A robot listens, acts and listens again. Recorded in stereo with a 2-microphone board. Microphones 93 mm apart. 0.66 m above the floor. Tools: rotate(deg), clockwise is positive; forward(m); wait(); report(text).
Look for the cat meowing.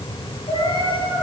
rotate(-75)
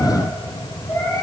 rotate(-30)
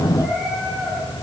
wait()
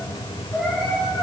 report("Facing the cat meowing, over 4 m away.")